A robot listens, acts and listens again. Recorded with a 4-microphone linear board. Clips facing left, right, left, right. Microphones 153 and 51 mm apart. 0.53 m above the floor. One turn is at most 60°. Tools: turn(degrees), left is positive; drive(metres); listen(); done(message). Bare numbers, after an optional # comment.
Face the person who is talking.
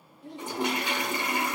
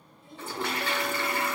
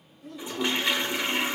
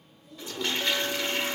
# The child speaking: about 65° left or 115° left.
turn(60)
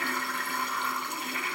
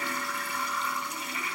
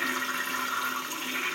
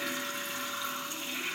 listen()
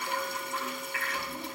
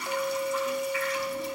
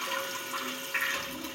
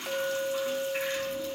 listen()
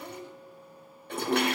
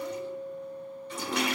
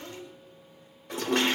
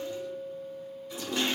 done("I heard a child speaking, but can't make it out now. It was about 5° left or 55° left.")